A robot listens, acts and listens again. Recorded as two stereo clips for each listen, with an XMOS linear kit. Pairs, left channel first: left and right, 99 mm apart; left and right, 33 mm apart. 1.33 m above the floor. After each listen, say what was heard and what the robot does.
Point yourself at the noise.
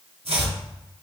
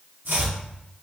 Turn 90° right.
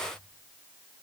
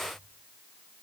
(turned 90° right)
Keep listening.
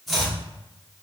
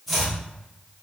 Facing the chopping, under 1 m away.